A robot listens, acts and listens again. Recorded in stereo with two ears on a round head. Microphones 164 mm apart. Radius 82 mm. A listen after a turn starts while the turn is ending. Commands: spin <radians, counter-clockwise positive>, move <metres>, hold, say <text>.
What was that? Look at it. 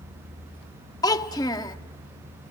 spin 0.35
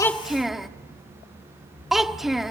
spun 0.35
say Facing the child speaking, under 1 m away.